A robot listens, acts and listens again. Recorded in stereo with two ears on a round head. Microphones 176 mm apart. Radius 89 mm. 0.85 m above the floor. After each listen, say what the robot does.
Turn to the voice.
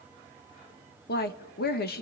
Turn 55° left.
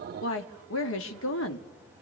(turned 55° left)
Turn 70° left.
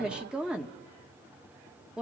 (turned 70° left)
Found it: a woman speaking, straight ahead, 1 to 2 m away.